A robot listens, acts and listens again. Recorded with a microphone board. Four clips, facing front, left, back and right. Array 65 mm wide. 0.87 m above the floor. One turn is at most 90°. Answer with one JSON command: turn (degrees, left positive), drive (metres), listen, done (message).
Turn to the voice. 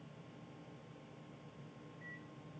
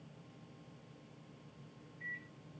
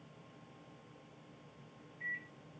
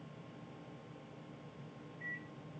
{"listen": true}
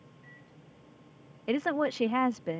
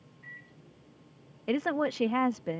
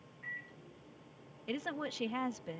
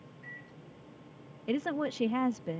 {"turn": 30}
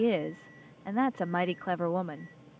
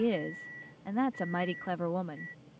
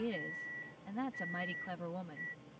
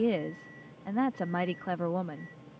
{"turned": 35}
{"done": "Facing the woman speaking."}